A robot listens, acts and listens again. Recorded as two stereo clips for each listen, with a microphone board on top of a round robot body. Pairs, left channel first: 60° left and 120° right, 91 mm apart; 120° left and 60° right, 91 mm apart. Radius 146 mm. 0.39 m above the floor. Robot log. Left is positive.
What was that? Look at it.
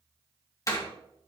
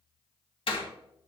note: The door slam: 110° left.
cmd yaw +110
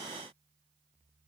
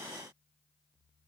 end: Facing where the door slam came from. I can't hear it now.